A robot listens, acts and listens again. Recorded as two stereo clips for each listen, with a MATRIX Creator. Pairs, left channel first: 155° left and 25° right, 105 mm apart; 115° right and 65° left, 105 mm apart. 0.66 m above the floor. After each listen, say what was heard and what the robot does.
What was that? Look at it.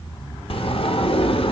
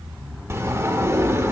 The sliding door: 130° left. Turn 130° left.
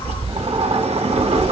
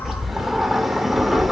The sliding door is now 20° right. Turn 20° right.
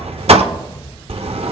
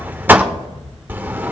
Facing the sliding door.